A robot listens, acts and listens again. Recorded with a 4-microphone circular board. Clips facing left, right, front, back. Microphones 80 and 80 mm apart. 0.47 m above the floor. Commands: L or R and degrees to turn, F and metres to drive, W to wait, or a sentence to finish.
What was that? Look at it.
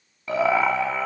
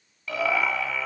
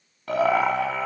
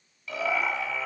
L40
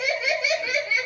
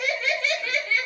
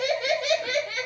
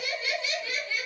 L15
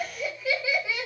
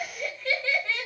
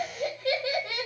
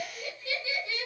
L10
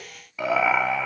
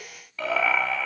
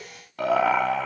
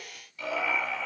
L20
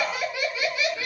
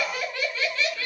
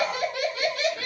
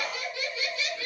L15
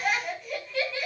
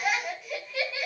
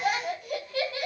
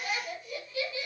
Facing the laughter, 2 to 4 m away.